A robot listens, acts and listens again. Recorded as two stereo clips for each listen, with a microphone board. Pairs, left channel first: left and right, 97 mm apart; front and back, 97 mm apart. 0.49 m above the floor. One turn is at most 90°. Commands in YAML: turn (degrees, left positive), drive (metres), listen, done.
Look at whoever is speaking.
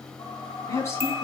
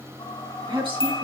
turn: 90
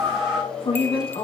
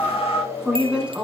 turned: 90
turn: 90
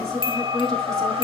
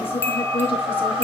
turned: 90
done: "Facing the woman speaking."